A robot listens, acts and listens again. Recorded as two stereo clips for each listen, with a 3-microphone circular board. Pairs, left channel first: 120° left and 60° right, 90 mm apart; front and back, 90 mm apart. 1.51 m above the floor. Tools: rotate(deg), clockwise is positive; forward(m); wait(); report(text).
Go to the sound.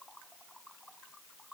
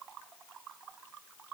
wait()
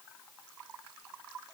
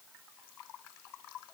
wait()
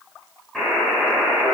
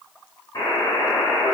rotate(-30)
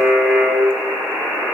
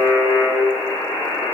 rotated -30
rotate(-10)
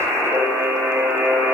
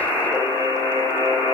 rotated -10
forward(1.0)
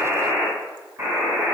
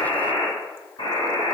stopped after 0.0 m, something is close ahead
report("Blocked. The buzzer is further on, straight ahead.")